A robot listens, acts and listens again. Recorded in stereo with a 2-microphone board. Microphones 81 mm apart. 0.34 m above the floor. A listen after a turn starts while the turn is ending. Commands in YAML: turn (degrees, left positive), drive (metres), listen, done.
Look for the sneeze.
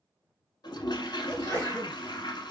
turn: 25
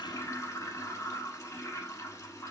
listen: true
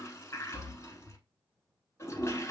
done: "I heard a sneeze, but can't make it out now. It was about straight ahead or 130° left."